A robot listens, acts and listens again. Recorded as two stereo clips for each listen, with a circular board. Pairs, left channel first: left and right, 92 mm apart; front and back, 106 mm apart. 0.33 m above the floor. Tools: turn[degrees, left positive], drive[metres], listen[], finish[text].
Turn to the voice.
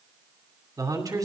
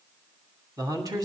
Thought: The man speaking: 130° right.
Action: turn[-130]
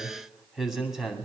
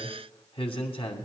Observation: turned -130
Action: finish[Found it: a man speaking, straight ahead, 2 to 4 m away.]